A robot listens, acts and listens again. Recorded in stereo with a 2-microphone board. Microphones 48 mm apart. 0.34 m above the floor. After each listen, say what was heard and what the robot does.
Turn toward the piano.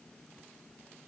Keep listening.
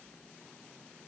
Keep listening.
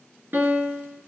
The piano: about 45° right or 135° right. Turn 45° right.
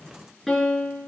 Found it: a piano, straight ahead, 2 to 4 m away.